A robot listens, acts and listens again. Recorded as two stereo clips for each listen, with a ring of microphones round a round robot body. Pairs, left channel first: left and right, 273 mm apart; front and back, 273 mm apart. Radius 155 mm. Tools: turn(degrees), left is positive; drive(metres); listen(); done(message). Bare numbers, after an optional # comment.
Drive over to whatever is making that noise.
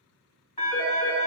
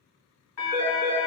# The phone ringing: 25° left.
turn(25)
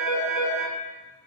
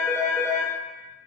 # The phone ringing is now 10° right.
turn(-10)
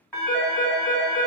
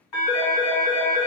drive(1.0)
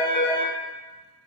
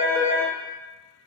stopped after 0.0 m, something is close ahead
done("Blocked. The phone ringing is further on, straight ahead.")